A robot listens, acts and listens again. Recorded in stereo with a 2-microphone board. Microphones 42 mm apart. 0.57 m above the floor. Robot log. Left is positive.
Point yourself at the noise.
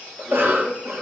note: The cough: about 65° right or 115° right.
cmd yaw -65
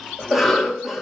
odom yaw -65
note: So it is at 10° right.
cmd yaw -10
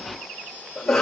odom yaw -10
end: Facing the cough, 1 to 2 m away.